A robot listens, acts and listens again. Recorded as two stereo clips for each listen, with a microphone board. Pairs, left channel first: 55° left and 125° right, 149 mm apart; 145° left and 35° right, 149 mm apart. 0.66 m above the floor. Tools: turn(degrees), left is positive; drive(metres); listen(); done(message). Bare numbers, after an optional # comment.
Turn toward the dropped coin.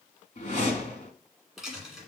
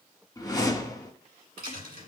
# The dropped coin: 35° right.
turn(-35)
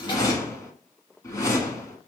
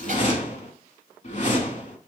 done("Facing where the dropped coin came from. I can't hear it now.")